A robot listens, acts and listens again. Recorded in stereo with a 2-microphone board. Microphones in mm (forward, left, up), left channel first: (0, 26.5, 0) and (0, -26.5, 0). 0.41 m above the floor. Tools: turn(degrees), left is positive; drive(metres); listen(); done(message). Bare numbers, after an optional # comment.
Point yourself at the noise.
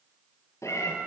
# The cat meowing: about 75° left or 105° left.
turn(75)
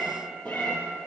# So it is at 35° left.
turn(35)
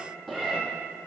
done("Facing the cat meowing.")